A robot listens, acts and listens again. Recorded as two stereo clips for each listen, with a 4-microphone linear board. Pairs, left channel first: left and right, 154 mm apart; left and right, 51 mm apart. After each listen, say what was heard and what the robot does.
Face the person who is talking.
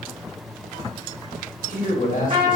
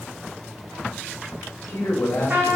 The man speaking: about 65° left or 115° left. Turn 65° left.
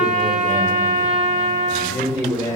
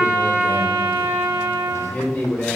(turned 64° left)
So it is at 30° left. Turn 30° left.
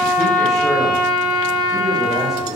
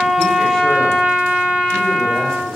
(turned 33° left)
Keep listening.
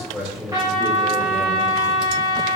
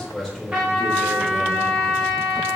Facing the man speaking.